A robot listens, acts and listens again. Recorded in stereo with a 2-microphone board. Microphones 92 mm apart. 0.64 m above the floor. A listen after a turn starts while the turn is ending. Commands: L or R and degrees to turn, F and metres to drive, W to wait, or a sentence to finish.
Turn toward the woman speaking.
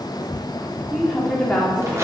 L30
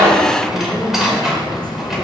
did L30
L30
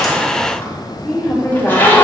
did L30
L30
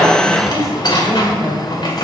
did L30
R10
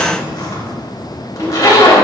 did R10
W
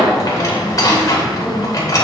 Found it: a woman speaking, straight ahead, 2 to 4 m away.